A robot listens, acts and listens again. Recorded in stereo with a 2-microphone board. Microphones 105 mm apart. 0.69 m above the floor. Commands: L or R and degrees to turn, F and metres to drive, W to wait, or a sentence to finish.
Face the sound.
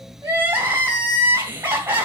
R20
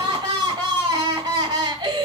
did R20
R135
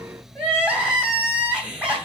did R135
R10
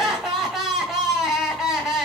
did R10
Facing the crying.